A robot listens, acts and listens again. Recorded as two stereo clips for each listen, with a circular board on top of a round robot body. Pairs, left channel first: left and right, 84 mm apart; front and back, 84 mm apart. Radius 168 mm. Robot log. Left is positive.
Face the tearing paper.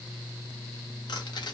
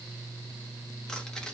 cmd idle
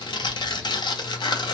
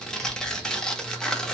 note: The tearing paper: 80° left.
cmd yaw +80
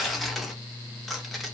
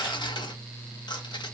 end: Found it: tearing paper, straight ahead, 1 to 2 m away.